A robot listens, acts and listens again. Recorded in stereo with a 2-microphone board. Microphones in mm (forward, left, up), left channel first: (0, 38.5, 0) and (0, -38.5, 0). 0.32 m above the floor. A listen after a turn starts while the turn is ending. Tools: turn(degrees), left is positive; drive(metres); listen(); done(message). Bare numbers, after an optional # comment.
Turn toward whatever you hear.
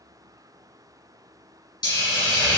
# The hiss: about 75° left or 105° left.
turn(75)
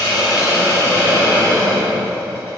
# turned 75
# So it is at 30° left.
turn(30)
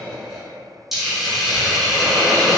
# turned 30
done("Facing the hiss, 1 to 2 m away.")